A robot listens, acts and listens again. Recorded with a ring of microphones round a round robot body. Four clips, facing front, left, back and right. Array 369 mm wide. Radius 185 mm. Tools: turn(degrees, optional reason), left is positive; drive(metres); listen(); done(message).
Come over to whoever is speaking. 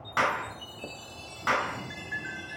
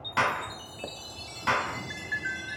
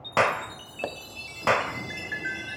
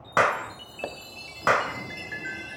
listen()
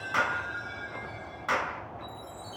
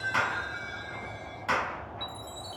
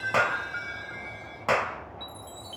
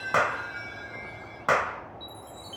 listen()
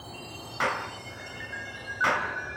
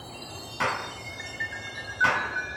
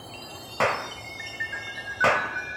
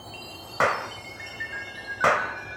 done("I can't make out anyone speaking, only a chime and a clap.")